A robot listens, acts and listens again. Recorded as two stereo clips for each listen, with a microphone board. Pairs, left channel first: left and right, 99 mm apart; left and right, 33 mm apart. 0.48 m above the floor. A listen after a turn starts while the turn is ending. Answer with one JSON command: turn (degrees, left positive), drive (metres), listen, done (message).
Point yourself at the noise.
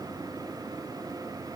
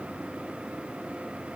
{"listen": true}
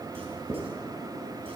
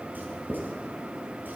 {"turn": -90}
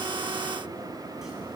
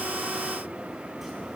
{"listen": true}
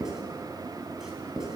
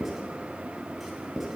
{"done": "Found it: writing, straight ahead, 2 to 4 m away."}